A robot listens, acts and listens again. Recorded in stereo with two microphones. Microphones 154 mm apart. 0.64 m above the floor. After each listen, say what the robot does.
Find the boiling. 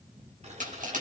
Turn 45° right.
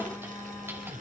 Keep listening.
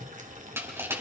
Turn 75° right.
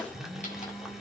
Keep listening.
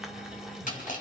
Found it: boiling, straight ahead, 2 to 4 m away.